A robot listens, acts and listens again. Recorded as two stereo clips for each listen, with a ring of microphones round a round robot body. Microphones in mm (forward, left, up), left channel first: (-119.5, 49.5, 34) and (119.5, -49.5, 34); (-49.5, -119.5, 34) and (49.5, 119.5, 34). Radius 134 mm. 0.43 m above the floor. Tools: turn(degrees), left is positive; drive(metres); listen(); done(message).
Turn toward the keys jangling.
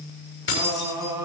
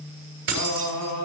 turn(degrees=115)
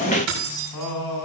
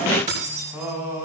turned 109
done("Facing the keys jangling.")